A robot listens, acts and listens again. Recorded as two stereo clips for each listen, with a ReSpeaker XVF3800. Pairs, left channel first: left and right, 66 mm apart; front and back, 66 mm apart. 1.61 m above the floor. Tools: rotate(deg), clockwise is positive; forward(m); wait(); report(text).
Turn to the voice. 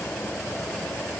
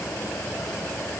wait()
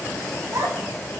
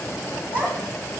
rotate(120)
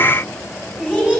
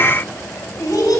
rotate(10)
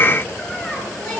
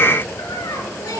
wait()
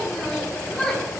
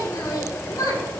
report("Found it: a child speaking, straight ahead.")